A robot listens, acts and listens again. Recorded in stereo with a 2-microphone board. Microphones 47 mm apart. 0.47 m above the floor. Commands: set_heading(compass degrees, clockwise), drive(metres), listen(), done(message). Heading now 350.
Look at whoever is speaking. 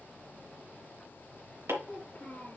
set_heading(320)
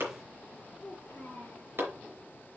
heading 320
set_heading(195)
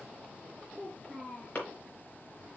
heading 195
set_heading(165)
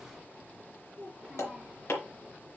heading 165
done("Found it: a child speaking, straight ahead, 2 to 4 m away.")